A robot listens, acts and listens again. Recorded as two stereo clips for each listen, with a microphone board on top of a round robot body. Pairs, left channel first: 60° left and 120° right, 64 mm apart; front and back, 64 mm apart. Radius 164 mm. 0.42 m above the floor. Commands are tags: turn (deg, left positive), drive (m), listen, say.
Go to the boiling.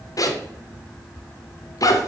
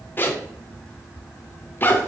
<listen/>
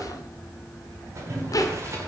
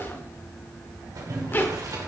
<turn deg="-160"/>
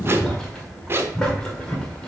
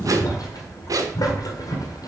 <turn deg="-20"/>
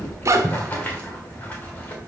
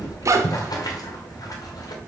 <drive m="1.0"/>
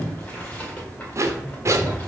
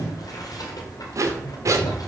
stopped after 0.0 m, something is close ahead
<turn deg="-10"/>
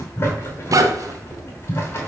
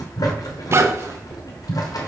<say>Something is in my way. I am facing the boiling but have not reached it.</say>